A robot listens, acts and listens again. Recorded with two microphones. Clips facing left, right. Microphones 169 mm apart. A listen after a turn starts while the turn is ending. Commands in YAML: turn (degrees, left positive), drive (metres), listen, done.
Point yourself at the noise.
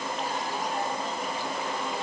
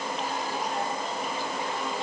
listen: true
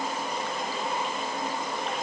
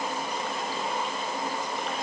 listen: true
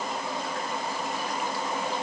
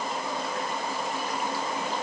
done: "I can't make out anything."